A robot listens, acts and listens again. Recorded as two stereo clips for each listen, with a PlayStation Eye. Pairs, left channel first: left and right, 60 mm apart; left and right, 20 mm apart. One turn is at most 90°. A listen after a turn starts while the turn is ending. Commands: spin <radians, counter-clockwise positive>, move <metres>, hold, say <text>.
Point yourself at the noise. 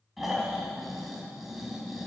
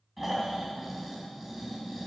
spin -0.52
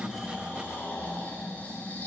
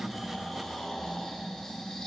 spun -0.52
spin 0.44
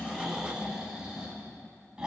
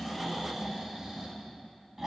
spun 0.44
spin -0.26
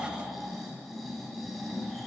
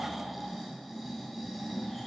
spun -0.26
say Found it: snoring, straight ahead.